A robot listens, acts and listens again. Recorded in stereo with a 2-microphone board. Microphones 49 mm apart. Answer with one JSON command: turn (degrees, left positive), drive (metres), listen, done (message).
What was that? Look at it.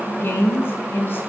{"turn": 50}
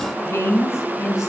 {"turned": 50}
{"turn": 75}
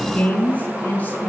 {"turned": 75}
{"turn": 35}
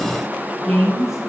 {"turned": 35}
{"done": "Facing the woman speaking, over 4 m away."}